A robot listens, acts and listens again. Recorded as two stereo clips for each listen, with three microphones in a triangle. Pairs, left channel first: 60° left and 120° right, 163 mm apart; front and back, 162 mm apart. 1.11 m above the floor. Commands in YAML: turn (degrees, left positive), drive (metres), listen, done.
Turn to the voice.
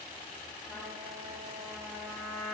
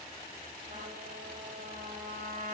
listen: true
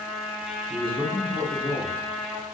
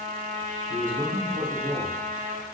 turn: 165
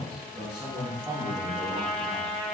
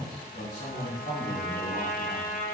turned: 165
turn: -45
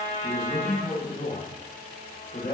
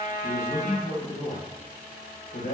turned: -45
done: "Found it: a man speaking, straight ahead, 1 to 2 m away."